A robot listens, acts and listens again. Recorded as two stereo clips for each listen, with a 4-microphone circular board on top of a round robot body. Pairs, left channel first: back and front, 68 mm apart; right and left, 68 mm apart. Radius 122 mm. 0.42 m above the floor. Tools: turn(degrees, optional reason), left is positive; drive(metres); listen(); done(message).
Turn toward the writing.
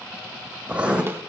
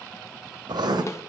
turn(degrees=75, reason="The writing: 75° left.")
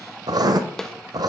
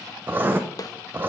turn(degrees=30, reason="The writing is now 30° left.")
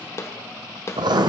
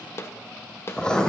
turn(degrees=-10, reason="The writing is now 10° right.")
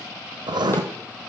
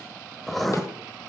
done("Found it: writing, straight ahead.")